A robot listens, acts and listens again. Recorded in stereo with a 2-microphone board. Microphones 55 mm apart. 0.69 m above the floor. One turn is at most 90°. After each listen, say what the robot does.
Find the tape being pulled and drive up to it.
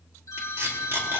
Turn 45° right.
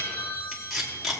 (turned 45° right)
Drive 1.0 m forward.
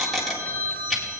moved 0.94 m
Drive 1.0 m forward.
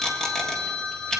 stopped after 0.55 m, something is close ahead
Turn 15° left.
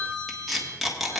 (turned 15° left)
I am next to the tape being pulled.